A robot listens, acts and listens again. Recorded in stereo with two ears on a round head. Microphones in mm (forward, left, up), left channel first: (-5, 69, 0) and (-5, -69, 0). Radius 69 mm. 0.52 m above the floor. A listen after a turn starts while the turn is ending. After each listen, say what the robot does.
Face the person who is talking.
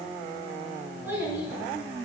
Turn 30° right.
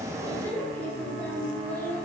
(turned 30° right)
Turn 15° left.
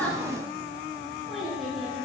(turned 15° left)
Facing the child speaking, 2 to 4 m away.